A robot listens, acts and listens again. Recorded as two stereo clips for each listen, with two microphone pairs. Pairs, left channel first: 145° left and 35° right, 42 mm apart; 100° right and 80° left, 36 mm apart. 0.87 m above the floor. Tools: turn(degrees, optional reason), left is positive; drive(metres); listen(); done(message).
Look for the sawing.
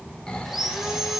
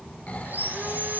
turn(degrees=45, reason="The sawing: 45° left.")
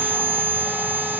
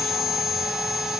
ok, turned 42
done("Found it: sawing, straight ahead.")